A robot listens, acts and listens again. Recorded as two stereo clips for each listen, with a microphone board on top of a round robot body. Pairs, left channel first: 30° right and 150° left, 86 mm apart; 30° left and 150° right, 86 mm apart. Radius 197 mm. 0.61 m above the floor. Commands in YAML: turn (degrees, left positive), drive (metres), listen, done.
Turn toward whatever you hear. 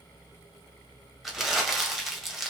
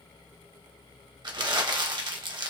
turn: -120
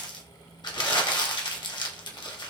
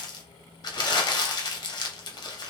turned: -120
done: "Found it: crumpling, straight ahead."